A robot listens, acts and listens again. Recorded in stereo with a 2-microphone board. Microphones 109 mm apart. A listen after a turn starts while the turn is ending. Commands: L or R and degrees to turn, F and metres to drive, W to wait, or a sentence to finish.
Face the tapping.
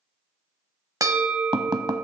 R40
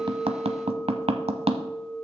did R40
R95
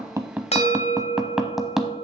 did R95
Facing the tapping.